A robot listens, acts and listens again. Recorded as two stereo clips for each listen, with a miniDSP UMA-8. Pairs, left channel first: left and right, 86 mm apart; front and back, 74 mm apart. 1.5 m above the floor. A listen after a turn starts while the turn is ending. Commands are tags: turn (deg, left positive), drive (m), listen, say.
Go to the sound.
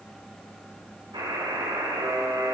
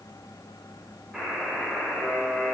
<turn deg="-95"/>
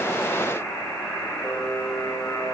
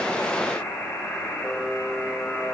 <turn deg="25"/>
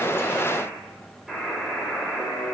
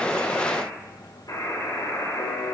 <drive m="1.0"/>
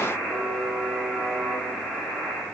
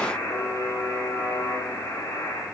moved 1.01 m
<drive m="1.0"/>
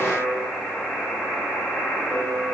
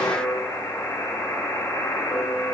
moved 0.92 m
<drive m="1.0"/>
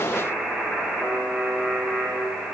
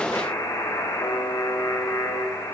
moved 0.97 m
<turn deg="-10"/>
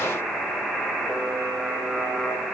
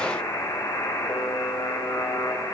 <drive m="1.0"/>
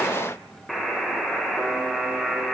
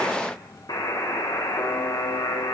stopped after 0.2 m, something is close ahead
<say>I am next to the buzzer.</say>